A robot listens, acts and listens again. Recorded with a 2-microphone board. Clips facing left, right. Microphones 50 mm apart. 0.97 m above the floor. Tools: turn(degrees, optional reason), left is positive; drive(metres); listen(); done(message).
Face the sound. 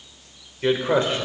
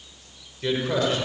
turn(degrees=30, reason="The man speaking: about 30° left or 150° left.")
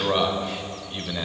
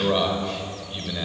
turn(degrees=10, reason="So it is at 10° left.")
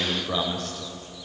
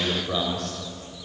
done("Facing the man speaking, over 4 m away.")